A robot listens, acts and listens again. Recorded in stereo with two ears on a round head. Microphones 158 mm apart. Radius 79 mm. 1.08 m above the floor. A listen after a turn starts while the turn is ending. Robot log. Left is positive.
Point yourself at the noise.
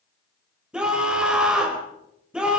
cmd yaw -30
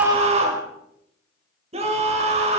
note: So it is at 140° right.
cmd yaw -140
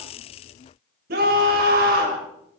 note: The scream is now 55° right.
cmd yaw -55
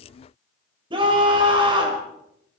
note: The scream is now 30° right.
cmd yaw -30
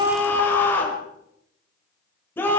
note: The scream is now 15° left.
cmd yaw +15
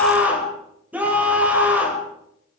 note: The scream is now 10° right.
cmd yaw -10
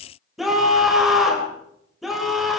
end: Facing the scream.